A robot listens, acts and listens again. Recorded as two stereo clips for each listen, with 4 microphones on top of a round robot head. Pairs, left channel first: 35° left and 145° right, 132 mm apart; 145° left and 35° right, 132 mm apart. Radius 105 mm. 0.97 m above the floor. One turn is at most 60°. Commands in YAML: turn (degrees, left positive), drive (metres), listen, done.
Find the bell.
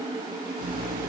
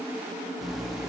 listen: true
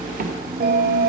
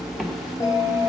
turn: -60
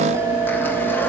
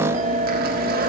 turn: -60
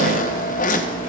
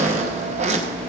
turn: -20
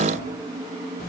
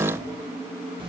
listen: true
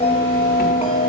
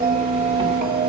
turn: -15
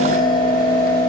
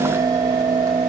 done: "Facing the bell, 1 to 2 m away."